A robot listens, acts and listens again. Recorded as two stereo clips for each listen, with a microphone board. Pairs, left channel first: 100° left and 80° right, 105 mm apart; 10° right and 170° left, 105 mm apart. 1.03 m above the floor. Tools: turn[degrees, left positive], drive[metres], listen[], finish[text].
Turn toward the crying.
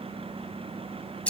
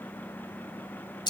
Action: listen[]
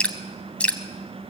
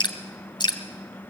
Action: listen[]
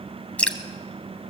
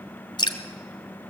Action: finish[I can't make out crying, only dripping.]